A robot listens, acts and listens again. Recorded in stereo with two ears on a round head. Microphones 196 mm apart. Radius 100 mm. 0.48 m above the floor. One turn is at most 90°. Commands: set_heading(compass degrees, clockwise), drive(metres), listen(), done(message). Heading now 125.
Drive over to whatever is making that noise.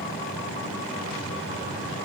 listen()
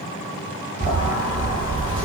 set_heading(150)
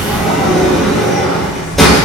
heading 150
drive(1.0)
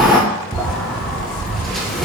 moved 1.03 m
drive(1.0)
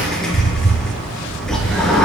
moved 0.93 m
drive(1.0)
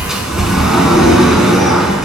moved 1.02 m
drive(1.0)
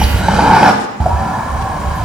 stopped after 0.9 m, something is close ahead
done("I am next to the sliding door.")